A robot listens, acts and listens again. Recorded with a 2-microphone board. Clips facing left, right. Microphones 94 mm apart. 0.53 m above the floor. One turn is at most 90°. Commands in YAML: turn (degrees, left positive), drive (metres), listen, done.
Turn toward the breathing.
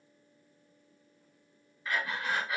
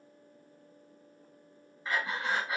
turn: -25
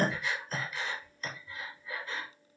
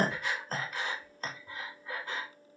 turn: -90
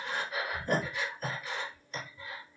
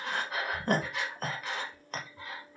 turn: -65
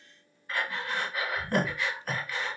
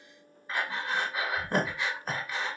turn: -20
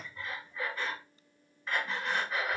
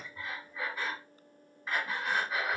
turn: -10
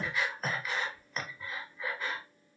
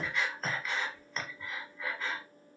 done: "Facing the breathing."